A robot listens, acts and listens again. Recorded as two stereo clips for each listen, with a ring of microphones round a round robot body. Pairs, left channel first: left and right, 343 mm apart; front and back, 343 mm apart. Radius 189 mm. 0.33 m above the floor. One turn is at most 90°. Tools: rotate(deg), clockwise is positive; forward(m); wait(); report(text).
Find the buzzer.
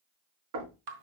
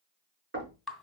wait()
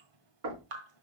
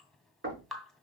wait()
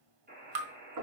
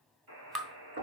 rotate(90)
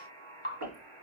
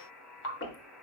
rotate(90)
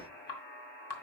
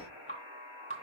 report("Found it: a buzzer, straight ahead, over 4 m away.")